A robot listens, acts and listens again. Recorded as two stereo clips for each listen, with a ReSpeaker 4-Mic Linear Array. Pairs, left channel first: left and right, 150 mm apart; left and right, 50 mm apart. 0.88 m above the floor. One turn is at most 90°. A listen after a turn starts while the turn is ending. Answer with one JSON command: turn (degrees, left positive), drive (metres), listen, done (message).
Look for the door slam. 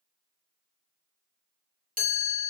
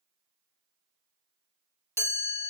{"listen": true}
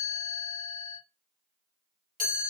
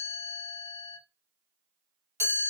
{"listen": true}
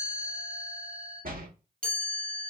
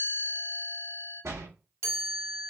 {"turn": -75}
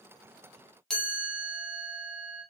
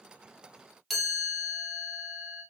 {"listen": true}
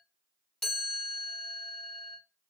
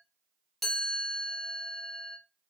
{"done": "I heard a door slam, but can't make it out now. It was about straight ahead or 30° right."}